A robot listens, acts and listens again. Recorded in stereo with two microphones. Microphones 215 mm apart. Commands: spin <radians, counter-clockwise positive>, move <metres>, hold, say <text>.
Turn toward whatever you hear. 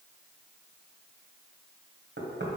spin -1.05
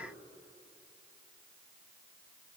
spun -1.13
hold
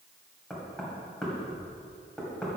say Facing the knocking.